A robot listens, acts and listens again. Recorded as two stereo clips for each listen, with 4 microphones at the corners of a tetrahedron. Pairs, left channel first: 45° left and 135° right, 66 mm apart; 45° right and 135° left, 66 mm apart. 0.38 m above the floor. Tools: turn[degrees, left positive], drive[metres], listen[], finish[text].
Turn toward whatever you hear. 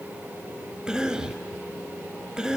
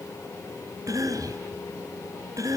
Thought: The cough: 150° left.
Action: turn[150]
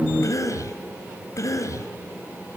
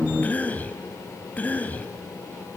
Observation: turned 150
Thought: The cough is now 20° left.
Action: turn[20]
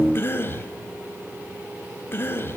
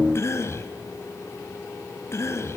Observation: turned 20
Action: finish[Facing the cough, 1 to 2 m away.]